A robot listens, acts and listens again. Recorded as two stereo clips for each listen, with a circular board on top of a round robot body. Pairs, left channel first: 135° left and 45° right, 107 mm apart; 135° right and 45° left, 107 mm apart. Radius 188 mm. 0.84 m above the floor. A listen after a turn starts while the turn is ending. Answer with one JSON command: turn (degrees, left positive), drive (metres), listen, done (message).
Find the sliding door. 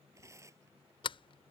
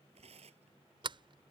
{"turn": 95}
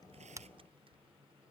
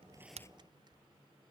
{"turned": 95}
{"listen": true}
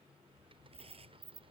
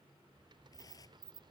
{"done": "Found it: a sliding door, straight ahead."}